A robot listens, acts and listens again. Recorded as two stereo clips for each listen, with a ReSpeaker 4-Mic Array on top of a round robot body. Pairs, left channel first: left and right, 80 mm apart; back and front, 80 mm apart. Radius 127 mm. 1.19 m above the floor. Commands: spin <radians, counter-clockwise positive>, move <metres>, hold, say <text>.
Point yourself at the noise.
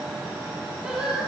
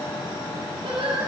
spin -0.17
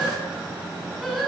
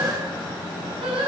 say Facing the singing, over 4 m away.